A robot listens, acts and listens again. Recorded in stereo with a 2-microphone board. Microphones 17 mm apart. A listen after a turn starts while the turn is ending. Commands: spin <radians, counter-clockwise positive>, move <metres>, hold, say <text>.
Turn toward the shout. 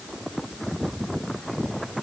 hold
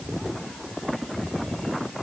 hold
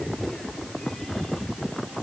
say I can't make out a shout to turn to.